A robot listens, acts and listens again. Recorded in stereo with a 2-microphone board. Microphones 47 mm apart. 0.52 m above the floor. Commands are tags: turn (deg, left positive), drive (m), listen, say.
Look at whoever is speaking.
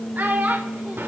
<turn deg="-45"/>
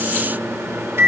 <listen/>
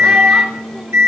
<listen/>
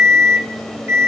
<say>I heard a child speaking, but can't make it out now. It was about straight ahead or 90° right.</say>